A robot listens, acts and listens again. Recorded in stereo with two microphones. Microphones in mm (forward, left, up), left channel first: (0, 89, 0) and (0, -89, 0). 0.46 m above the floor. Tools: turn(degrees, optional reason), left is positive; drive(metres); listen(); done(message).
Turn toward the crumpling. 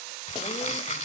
turn(degrees=45, reason="The crumpling: about 45° left or 135° left.")
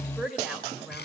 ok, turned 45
listen()
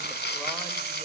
turn(degrees=85, reason="So it is at 85° left.")
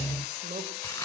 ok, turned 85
listen()
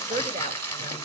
turn(degrees=15, reason="The crumpling is now 15° left.")
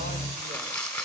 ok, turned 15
done("Found it: crumpling, straight ahead, 1 to 2 m away.")